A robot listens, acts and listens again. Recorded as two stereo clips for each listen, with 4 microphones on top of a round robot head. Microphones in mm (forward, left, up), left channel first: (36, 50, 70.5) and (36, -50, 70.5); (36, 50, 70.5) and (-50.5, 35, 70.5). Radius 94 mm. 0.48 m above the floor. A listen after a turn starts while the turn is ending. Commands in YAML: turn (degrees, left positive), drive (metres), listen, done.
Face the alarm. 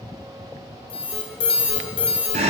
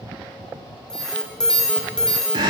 turn: 90
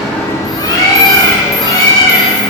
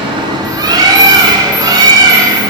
listen: true
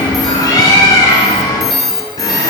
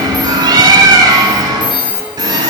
done: "Found it: an alarm, straight ahead."